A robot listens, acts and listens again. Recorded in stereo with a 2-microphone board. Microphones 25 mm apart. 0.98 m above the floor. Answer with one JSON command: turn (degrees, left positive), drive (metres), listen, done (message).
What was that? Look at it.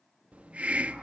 {"turn": -55}
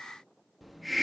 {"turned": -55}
{"done": "Facing the hiss, 1 to 2 m away."}